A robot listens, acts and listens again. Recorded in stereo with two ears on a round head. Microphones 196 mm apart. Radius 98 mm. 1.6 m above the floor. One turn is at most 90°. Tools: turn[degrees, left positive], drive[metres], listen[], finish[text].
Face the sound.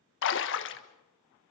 Thought: The splash: about 60° left or 120° left.
Action: turn[60]
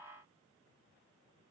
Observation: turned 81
Action: listen[]
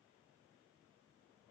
Action: finish[I heard a splash, but can't make it out now. It was about 20° right or 40° left.]